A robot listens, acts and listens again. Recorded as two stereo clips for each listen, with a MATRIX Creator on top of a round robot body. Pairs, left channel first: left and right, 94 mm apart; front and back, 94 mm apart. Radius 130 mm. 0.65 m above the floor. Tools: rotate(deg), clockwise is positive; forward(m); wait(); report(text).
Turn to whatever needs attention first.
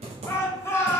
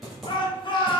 rotate(-30)
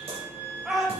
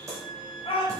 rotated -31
report("Found it: a shout, straight ahead.")